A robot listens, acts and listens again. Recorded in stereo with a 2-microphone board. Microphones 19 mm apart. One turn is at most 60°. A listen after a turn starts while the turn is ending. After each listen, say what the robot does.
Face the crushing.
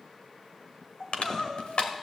Turn 60° left.
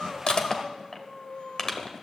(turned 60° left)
Turn 30° left.
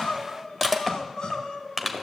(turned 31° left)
Found it: crushing, straight ahead.